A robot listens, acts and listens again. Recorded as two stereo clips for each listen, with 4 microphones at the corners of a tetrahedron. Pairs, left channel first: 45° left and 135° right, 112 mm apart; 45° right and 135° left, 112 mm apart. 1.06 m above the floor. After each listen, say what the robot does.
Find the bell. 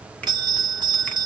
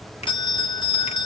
Turn 85° right.
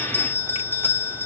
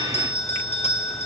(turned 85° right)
Turn 25° right.
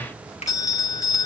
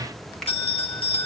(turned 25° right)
Turn 15° right.
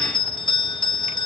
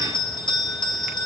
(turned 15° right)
Facing the bell.